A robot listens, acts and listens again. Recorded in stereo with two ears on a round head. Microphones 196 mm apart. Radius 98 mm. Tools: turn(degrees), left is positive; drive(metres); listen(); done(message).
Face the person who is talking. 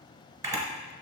listen()
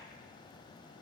listen()
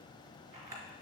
done("I can't make out anyone speaking to turn to.")